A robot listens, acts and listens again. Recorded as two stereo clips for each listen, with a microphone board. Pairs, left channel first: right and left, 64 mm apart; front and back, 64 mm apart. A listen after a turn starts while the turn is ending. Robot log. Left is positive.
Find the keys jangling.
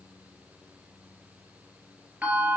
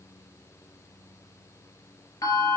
cmd idle
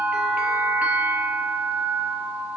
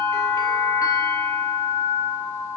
cmd idle
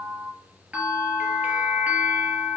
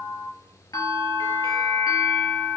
end: I can't make out keys jangling to turn to.